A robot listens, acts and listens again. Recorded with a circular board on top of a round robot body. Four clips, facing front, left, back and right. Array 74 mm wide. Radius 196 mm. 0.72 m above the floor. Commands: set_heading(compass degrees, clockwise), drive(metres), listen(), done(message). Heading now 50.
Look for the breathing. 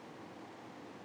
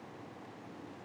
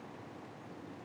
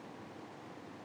listen()
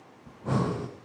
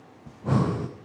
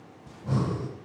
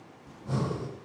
set_heading(350)
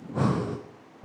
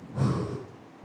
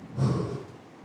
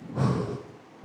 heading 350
set_heading(5)
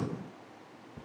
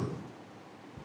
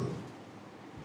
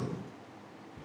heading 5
done("Facing the breathing, under 1 m away.")